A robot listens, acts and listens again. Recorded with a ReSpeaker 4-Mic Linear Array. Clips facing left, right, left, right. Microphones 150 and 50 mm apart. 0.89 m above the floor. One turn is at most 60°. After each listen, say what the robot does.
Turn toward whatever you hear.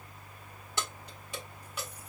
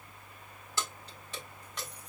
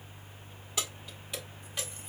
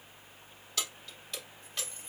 Turn 30° left.
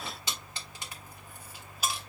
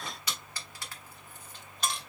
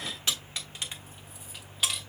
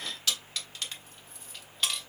Turn 30° left.
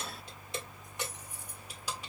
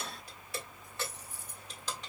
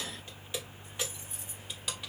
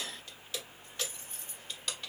Turn 30° left.
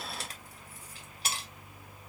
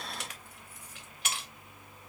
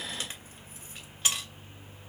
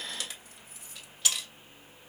Turn 60° left.
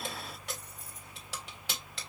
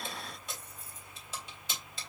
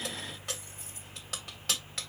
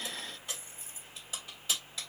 Turn 60° left.
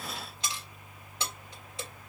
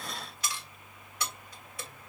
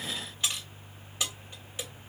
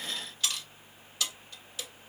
Turn 25° left.
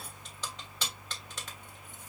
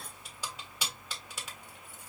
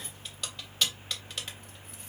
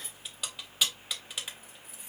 Turn 10° right.
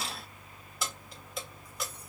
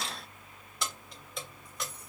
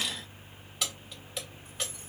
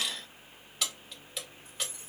Facing the keys jangling.